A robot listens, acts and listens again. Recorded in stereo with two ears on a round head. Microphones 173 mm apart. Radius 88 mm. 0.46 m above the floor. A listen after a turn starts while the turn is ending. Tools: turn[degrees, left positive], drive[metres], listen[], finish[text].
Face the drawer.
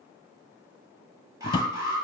Thought: The drawer: about 25° left or 155° left.
Action: turn[25]
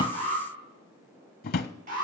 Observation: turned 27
Thought: So it is at 130° left.
Action: turn[130]
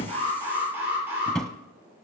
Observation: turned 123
Action: finish[Found it: a drawer, straight ahead, under 1 m away.]